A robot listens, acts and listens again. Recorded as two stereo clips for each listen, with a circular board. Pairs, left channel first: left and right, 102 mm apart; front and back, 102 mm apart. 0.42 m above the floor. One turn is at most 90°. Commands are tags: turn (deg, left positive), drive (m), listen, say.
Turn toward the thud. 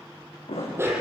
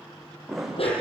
<turn deg="90"/>
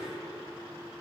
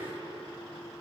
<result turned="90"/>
<say>I heard a thud from this way, but can't make it out now.</say>